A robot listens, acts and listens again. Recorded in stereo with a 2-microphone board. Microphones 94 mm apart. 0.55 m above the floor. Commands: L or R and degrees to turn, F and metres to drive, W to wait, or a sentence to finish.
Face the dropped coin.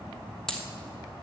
L30
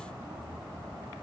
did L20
W
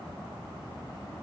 I heard a dropped coin, but can't make it out now. It was about 15° right or 155° left.